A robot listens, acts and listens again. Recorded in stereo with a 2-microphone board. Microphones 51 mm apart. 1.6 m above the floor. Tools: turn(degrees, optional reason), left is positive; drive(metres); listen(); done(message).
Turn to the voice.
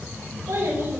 turn(degrees=-70, reason="The child speaking: about 70° right or 110° right.")
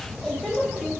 done("Facing the child speaking.")